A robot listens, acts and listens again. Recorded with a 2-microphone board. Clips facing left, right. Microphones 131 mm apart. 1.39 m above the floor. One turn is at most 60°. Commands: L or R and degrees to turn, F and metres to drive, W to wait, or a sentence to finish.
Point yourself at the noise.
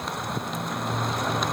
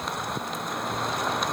W
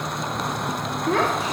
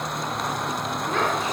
L60
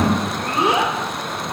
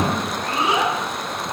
L50
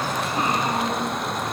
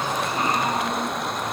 W
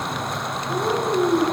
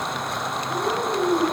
L15
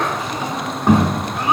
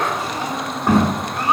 Facing the child speaking.